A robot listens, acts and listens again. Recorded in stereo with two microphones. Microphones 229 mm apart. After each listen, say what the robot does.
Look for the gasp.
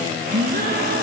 Turn 50° right.
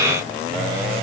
Keep listening.
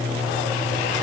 I heard a gasp, but can't make it out now. It was about straight ahead or 80° right.